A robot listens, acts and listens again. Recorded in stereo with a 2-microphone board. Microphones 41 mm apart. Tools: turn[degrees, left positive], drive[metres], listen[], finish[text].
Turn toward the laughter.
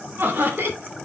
Thought: The laughter: about 70° right or 110° right.
Action: turn[-70]
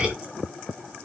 Action: listen[]
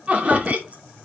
Thought: So it is at 40° right.
Action: turn[-40]
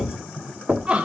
Thought: The laughter is now 35° right.
Action: turn[-35]
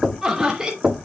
Thought: The laughter is now 15° right.
Action: turn[-15]
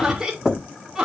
Thought: The laughter is now 10° right.
Action: turn[-10]
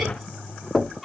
Action: finish[Found it: laughter, straight ahead.]